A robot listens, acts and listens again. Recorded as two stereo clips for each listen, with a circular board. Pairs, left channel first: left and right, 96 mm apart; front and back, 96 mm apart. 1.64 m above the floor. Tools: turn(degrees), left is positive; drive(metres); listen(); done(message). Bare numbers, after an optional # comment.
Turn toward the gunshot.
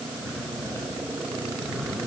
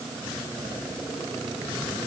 listen()
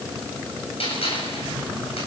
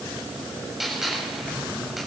# The gunshot: 90° left.
turn(90)
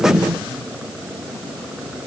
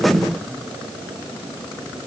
done("Facing where the gunshot came from. I can't hear it now.")